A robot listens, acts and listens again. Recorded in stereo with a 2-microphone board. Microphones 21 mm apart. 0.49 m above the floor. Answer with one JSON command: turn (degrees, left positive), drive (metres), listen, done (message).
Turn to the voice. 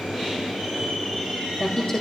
{"turn": 25}
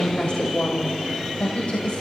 {"turn": 115}
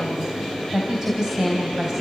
{"turn": -30}
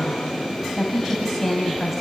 {"done": "Found it: a woman speaking, straight ahead, 2 to 4 m away."}